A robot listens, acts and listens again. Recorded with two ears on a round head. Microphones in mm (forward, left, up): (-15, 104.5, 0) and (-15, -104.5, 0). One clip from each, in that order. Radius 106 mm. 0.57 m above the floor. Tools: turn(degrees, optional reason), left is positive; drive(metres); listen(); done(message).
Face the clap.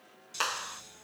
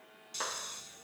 turn(degrees=65, reason="The clap: about 65° left or 115° left.")
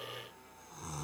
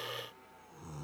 listen()
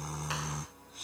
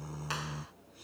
listen()
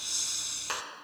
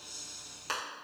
done("Found it: a clap, straight ahead.")